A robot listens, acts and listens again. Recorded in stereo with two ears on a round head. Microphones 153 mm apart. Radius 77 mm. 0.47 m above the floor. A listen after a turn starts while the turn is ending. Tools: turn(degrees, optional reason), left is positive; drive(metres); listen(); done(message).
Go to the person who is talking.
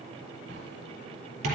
listen()
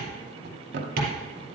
listen()
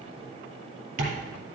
done("I can't make out anyone speaking, only tapping and a drawer.")